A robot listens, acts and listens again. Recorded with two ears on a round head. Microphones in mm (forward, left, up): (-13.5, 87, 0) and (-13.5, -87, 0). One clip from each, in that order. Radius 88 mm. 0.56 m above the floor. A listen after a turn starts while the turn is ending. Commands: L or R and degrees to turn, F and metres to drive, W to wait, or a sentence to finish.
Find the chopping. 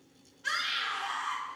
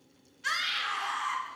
W
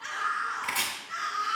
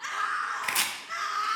R30
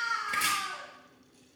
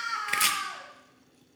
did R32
R120
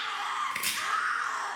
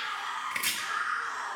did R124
Facing the chopping, under 1 m away.